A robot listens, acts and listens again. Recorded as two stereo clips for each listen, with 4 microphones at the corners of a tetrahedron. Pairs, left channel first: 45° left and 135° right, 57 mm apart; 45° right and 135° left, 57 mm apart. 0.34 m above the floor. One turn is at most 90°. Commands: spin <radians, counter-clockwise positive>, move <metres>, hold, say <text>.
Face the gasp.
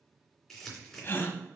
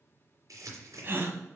spin 1.57
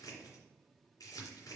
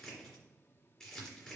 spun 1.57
say Facing where the gasp came from. I can't hear it now.